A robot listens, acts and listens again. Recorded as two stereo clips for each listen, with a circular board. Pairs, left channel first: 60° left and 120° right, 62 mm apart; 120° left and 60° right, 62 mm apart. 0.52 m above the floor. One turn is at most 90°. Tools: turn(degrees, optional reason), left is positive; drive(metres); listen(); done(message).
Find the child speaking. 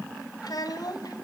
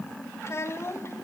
turn(degrees=70, reason="The child speaking: 70° left.")
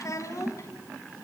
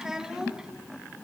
turn(degrees=20, reason="The child speaking is now 20° left.")
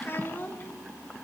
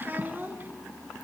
done("Found it: a child speaking, straight ahead, 2 to 4 m away.")